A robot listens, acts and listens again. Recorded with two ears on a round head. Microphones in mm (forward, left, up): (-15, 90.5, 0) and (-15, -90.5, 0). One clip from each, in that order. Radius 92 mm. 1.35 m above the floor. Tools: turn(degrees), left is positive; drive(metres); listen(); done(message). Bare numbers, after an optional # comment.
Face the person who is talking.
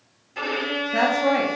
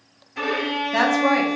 # The woman speaking: about 25° right or 155° right.
turn(-25)
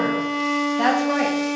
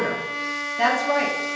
done("Found it: a woman speaking, straight ahead, 1 to 2 m away.")